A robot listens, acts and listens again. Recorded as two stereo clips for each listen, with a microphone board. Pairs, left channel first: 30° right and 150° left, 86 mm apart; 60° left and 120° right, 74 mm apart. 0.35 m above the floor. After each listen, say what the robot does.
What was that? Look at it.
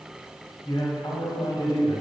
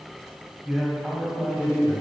Turn 40° right.
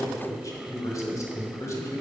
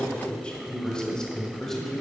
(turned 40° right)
Turn 25° right.
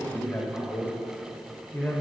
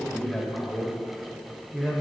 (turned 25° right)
Turn 50° right.
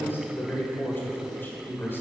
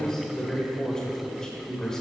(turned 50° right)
Turn 15° right.
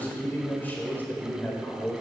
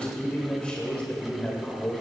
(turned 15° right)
Facing the man speaking, 1 to 2 m away.